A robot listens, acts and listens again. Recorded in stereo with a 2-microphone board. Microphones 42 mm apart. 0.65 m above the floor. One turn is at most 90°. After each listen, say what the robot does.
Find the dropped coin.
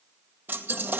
Turn 45° right.
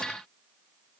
Keep listening.
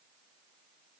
I heard a dropped coin, but can't make it out now. It was about straight ahead or 90° right.